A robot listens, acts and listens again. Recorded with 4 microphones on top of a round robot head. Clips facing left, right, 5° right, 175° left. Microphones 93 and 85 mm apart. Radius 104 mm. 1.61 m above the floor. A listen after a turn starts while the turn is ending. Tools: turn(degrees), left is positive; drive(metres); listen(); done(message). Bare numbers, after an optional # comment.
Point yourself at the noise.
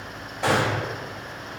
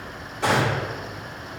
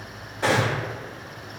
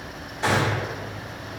# The gunshot: 55° right.
turn(-55)
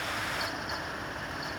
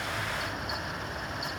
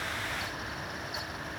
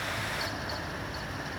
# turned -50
done("Facing where the gunshot came from. I can't hear it now.")